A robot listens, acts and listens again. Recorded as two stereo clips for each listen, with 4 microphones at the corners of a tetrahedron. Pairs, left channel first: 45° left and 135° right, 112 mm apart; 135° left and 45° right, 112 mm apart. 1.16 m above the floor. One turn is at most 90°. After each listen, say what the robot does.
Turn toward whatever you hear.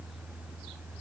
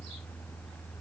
Keep listening.
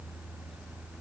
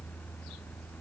Keep listening.
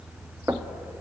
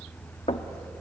Turn 90° left.
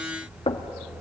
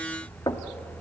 Turn 80° left.
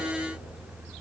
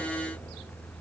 Keep listening.
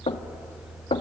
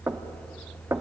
Turn 20° left.
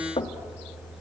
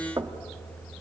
Facing the knocking, 1 to 2 m away.